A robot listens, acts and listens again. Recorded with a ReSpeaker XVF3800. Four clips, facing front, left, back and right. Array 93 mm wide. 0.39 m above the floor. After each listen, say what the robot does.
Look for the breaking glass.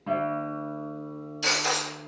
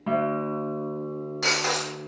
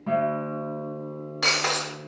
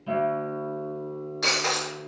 Turn 170° left.
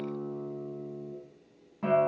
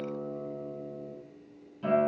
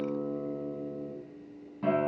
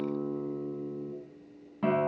I heard breaking glass from this way, but can't make it out now.